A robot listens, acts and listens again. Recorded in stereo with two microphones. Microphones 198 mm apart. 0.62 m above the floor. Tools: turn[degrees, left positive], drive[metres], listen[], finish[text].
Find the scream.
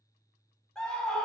Action: turn[30]
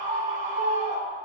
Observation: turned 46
Thought: So it is at 45° right.
Action: turn[-45]
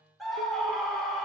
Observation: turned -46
Action: finish[Found it: a scream, straight ahead.]